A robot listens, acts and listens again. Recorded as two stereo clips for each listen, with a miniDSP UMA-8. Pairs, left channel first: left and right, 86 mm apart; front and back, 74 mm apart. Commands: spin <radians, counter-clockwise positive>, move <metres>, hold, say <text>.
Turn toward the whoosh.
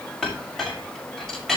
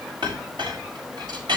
hold
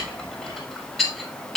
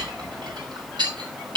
hold
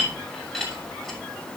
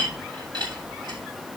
say I can't make out a whoosh, only a clink.